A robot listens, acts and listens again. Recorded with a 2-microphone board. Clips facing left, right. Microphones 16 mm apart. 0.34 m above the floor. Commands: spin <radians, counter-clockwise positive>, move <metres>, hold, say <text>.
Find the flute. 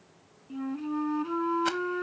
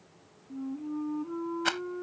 spin 1.22
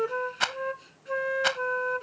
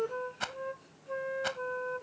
spin 0.70
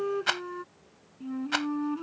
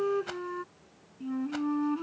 say Found it: a flute, straight ahead.